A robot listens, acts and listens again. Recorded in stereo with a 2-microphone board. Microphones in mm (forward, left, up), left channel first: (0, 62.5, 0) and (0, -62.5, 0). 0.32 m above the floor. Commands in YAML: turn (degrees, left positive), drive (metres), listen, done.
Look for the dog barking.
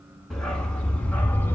turn: 30
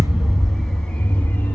turn: 15
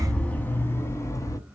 turn: 25
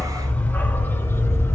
turn: 20
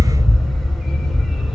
turn: 30
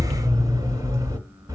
turn: -25
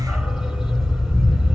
done: "Found it: a dog barking, straight ahead."